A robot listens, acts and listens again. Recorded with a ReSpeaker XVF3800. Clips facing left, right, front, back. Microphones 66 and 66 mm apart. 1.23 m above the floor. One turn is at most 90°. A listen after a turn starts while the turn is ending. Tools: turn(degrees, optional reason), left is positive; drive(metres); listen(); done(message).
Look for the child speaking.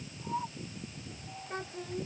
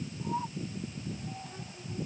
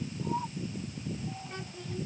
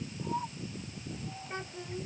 turn(degrees=90, reason="The child speaking: 115° left.")
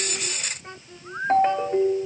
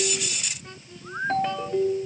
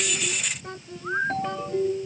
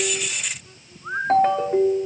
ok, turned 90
turn(degrees=25, reason="The child speaking is now 25° left.")
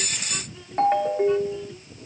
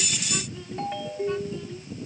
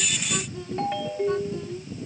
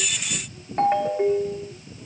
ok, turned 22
listen()
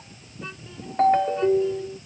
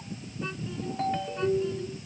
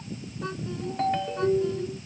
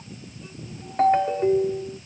listen()
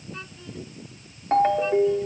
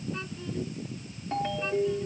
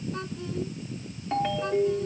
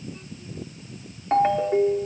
done("Facing where the child speaking came from. I can't hear it now.")